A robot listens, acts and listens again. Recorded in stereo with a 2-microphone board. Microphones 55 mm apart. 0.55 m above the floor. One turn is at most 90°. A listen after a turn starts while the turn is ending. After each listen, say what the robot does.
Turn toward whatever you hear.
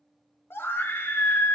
Turn 45° left.
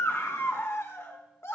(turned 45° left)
Turn 70° left.
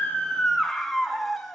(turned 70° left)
Facing the scream, 1 to 2 m away.